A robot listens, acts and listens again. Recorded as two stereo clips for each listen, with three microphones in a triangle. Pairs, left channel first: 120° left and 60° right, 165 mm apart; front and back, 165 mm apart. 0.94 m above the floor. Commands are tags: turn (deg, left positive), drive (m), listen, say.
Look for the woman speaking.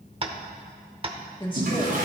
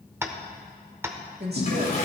<turn deg="180"/>
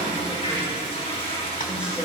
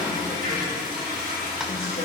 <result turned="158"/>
<turn deg="20"/>
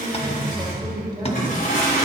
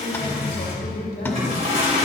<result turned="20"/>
<say>Facing the woman speaking, 2 to 4 m away.</say>